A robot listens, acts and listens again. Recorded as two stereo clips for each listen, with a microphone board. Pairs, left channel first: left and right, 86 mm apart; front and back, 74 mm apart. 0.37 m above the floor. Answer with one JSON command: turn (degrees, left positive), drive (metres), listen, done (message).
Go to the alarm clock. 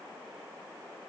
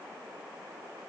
{"listen": true}
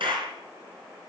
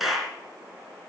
{"listen": true}
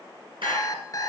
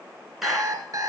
{"turn": 140}
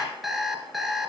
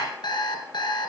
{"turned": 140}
{"drive": 1.0}
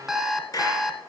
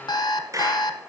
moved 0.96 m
{"drive": 1.0}
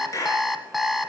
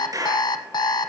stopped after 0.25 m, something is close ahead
{"done": "I am next to the alarm clock."}